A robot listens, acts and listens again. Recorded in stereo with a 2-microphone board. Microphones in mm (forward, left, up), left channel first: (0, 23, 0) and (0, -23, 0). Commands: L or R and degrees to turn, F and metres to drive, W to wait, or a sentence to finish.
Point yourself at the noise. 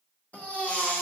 L35
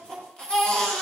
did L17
L20
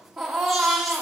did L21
Facing the baby crying.